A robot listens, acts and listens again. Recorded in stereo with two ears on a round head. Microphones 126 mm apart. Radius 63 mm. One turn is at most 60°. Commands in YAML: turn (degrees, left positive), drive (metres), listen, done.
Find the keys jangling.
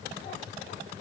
listen: true
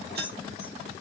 turn: -60
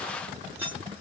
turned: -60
turn: -15
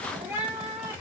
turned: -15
listen: true
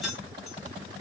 done: "Facing the keys jangling, under 1 m away."